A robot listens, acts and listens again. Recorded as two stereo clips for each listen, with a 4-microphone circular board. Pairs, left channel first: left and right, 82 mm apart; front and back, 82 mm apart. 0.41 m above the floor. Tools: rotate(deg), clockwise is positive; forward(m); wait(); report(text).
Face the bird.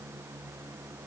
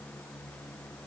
wait()
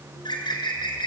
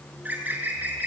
rotate(-110)
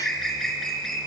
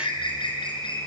report("Facing the bird, 2 to 4 m away.")